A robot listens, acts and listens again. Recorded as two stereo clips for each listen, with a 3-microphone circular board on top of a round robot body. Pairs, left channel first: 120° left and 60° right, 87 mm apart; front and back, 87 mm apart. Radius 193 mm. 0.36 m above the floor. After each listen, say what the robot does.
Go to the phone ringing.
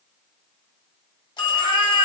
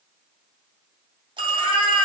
Turn 155° left.
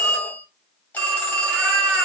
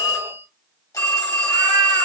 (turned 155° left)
Turn 50° left.
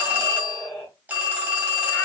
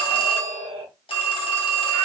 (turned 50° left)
Turn 10° left.
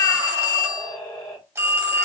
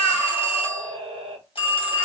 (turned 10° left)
Drive 1.0 m forward.
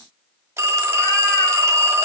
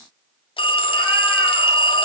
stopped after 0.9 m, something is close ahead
I am next to the phone ringing.